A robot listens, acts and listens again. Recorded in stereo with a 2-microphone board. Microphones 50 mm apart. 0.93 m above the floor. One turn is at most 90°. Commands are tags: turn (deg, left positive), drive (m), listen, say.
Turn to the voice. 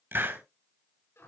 <listen/>
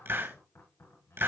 <listen/>
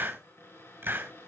<say>I can't make out anyone speaking to turn to.</say>